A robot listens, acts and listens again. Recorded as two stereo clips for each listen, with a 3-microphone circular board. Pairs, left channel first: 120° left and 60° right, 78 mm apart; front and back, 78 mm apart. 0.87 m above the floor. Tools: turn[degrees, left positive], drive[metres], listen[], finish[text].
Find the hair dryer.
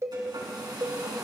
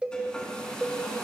Thought: The hair dryer: 75° right.
Action: turn[-75]
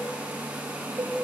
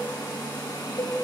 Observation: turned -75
Action: finish[Found it: a hair dryer, straight ahead.]